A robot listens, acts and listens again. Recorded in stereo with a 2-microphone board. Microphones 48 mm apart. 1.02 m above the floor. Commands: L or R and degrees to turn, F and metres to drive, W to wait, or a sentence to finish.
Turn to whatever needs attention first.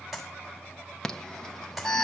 L30
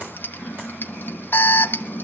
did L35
L130
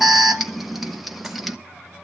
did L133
Facing the alarm, 1 to 2 m away.